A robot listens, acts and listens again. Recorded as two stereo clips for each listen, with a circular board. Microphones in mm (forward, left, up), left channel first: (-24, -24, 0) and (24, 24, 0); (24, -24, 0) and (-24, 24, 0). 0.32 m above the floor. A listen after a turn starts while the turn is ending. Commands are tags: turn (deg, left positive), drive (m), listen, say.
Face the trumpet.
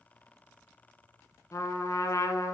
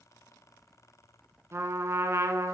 <turn deg="-175"/>
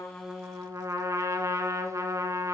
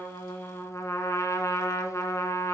<say>Found it: a trumpet, straight ahead, under 1 m away.</say>